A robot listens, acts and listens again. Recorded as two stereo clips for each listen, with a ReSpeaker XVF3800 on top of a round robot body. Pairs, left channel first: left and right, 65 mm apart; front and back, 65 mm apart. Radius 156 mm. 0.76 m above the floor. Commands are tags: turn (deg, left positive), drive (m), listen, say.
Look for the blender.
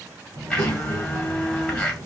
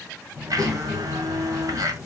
<turn deg="165"/>
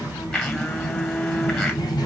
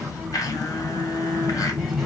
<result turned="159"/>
<turn deg="10"/>
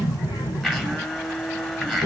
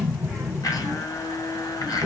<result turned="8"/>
<say>Facing the blender.</say>